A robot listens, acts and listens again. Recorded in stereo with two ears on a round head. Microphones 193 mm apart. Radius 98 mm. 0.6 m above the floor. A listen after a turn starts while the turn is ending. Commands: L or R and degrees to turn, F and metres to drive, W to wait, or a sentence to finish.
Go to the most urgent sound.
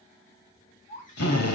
L35
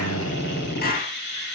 W
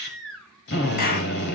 F1.0
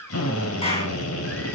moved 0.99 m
L10
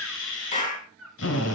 F1.0
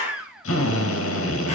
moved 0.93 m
F1.0
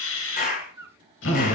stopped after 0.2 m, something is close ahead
R15
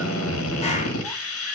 W
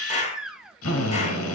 I am next to the baby crying.